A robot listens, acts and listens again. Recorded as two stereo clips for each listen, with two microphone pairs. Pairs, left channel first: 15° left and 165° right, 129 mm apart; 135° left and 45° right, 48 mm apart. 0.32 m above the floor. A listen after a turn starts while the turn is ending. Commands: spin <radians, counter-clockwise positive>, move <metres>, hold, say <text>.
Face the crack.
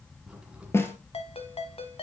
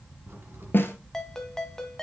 spin -1.40
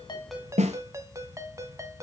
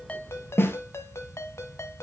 say Facing where the crack came from. I can't hear it now.